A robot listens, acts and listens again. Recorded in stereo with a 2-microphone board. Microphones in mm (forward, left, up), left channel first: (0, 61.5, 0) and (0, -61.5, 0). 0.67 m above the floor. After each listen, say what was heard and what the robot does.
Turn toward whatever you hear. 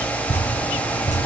The dripping: about 70° left or 110° left. Turn 70° left.
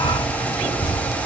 So it is at 35° left. Turn 35° left.
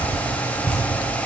The dripping is now 10° left. Turn 10° left.
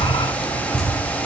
Facing the dripping.